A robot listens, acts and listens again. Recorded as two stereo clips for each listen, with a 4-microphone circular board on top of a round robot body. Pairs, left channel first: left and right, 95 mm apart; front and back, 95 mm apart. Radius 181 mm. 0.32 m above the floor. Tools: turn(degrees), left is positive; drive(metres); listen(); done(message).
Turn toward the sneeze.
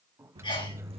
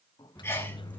turn(degrees=65)
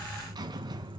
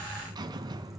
done("I heard a sneeze from this way, but can't make it out now.")